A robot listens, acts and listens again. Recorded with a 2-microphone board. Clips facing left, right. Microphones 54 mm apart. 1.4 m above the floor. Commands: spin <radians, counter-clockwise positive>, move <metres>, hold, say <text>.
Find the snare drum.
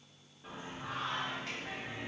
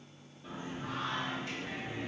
hold
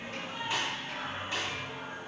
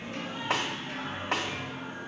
spin -1.05
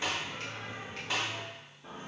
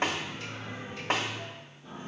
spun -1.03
spin -0.96
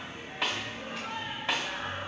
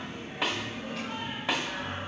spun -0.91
say Found it: a snare drum, straight ahead, 1 to 2 m away.